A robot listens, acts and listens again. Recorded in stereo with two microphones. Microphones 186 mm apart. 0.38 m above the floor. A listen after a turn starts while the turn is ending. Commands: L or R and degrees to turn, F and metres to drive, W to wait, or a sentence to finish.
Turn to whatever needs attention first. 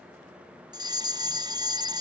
R25
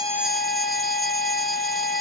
W
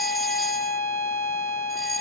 W
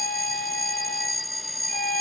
Found it: a fire alarm, straight ahead.